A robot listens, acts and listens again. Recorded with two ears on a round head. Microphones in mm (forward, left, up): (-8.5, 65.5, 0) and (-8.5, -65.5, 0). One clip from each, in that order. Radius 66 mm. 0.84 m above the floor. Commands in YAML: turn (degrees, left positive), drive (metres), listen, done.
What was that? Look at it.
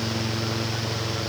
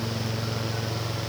listen: true
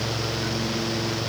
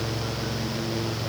listen: true
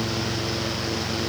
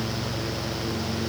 done: "I can't make out anything to turn to."